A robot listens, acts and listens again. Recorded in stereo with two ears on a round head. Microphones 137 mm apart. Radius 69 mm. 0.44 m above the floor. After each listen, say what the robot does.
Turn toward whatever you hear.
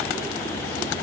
Keep listening.
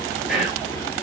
Turn 30° left.
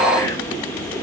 Turn 150° left.
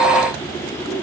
Keep listening.
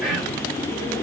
Facing the whispering.